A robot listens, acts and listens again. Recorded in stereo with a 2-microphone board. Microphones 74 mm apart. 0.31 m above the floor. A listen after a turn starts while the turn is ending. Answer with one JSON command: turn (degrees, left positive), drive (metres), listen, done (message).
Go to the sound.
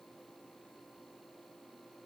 {"listen": true}
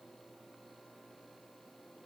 {"listen": true}
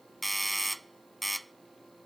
{"turn": 30}
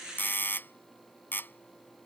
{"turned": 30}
{"turn": 150}
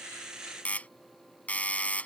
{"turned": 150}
{"turn": 20}
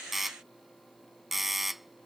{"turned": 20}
{"drive": 1.0}
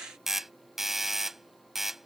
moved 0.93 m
{"drive": 1.0}
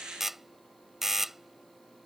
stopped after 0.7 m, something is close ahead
{"done": "Arrived at the doorbell, straight ahead."}